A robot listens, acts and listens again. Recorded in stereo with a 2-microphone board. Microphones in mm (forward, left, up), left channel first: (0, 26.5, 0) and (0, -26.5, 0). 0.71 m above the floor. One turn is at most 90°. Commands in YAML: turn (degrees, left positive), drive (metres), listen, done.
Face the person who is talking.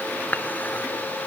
listen: true
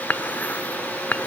listen: true
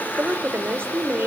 turn: -50
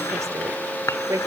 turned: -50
turn: -80
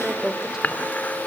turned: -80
turn: -10
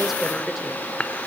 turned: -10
done: "Found it: a woman speaking, straight ahead."